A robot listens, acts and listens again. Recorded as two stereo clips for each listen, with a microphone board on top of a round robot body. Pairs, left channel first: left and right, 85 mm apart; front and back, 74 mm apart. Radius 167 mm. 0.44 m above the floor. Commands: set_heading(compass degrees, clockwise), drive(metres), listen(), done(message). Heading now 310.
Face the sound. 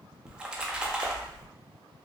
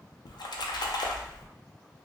set_heading(320)
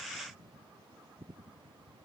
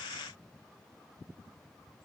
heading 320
done("I heard a splash from this way, but can't make it out now.")